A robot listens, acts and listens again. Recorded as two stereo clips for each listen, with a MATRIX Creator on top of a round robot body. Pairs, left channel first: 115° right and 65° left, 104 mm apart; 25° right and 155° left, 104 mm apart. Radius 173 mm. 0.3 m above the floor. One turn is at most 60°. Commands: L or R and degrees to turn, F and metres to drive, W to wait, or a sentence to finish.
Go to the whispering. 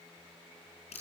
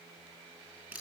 W
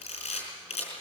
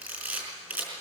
W
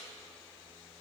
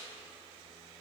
I can't make out whispering to turn to.